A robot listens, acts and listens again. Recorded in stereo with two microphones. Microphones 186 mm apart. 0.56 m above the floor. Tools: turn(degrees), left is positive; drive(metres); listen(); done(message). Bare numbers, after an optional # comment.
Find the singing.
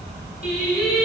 # The singing: about 65° left or 115° left.
turn(65)
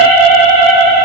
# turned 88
# So it is at 10° left.
turn(10)
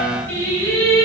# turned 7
# The singing is now 15° left.
turn(15)
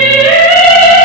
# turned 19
done("Facing the singing.")